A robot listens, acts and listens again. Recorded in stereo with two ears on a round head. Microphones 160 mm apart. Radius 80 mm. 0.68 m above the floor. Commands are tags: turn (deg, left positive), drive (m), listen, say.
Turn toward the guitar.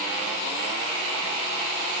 <listen/>
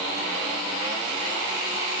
<listen/>
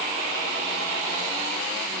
<say>I can't make out a guitar.</say>